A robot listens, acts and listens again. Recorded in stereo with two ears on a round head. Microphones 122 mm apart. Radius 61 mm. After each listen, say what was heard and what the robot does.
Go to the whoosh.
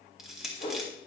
The whoosh: about 50° left or 130° left. Turn 50° left.
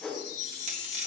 Drive 1.0 m forward.
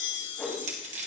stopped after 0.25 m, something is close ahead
The whoosh is now 10° left. Turn 10° left.
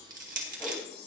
Keep listening.
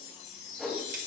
Blocked. The whoosh is further on, straight ahead.